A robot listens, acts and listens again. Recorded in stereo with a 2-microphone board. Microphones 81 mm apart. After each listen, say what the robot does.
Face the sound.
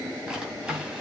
Turn 30° right.
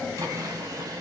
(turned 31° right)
Turn 135° right.
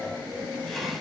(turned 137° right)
Facing the drawer, 2 to 4 m away.